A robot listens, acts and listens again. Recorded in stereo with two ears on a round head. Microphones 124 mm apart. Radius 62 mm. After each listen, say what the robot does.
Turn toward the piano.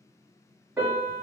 Turn 30° right.
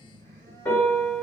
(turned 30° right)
Turn 20° left.
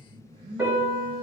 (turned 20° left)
Facing the piano, 1 to 2 m away.